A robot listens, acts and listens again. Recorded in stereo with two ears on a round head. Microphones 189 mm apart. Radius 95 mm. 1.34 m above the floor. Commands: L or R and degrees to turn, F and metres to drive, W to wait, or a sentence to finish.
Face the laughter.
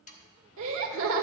R70
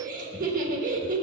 R40
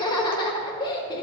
L20
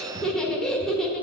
Facing the laughter, 1 to 2 m away.